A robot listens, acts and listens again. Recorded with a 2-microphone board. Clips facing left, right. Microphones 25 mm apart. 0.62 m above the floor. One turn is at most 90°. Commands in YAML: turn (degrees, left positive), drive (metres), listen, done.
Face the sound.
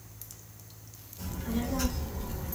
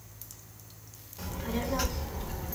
turn: -25
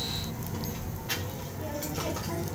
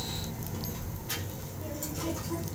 turn: 50
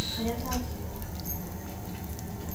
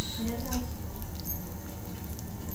turn: 35
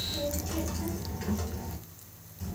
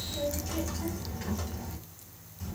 done: "Facing the child speaking."